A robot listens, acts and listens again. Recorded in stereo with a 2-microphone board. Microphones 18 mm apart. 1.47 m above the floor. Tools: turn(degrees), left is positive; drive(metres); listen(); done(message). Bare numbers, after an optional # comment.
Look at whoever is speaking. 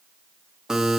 listen()
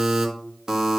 listen()
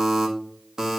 done("I can't make out anyone speaking to turn to.")